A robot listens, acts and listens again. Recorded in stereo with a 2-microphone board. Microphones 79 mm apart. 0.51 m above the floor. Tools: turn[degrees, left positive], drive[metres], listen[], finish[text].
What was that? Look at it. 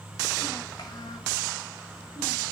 Thought: The child speaking: about 50° left or 130° left.
Action: turn[50]
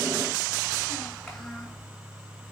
Action: finish[Found it: a child speaking, straight ahead.]